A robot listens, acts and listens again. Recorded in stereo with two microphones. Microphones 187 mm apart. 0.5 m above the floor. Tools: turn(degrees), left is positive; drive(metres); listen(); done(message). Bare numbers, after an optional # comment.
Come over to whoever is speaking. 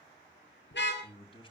# The man speaking: about 30° left or 150° left.
turn(30)
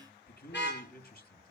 # So it is at 120° left.
turn(120)
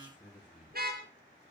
# The man speaking is now 10° right.
turn(-10)
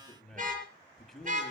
drive(1.0)
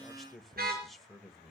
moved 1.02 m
drive(1.0)
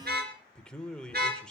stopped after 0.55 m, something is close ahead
done("I am next to the man speaking.")